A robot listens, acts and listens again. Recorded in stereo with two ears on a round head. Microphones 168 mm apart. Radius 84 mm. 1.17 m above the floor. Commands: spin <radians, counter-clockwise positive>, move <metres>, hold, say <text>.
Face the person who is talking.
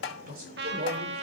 spin -0.87
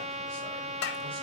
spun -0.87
hold
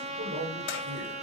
spin -1.31
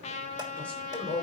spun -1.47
spin 0.17
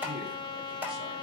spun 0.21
hold
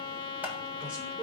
say Found it: a man speaking, straight ahead, 2 to 4 m away.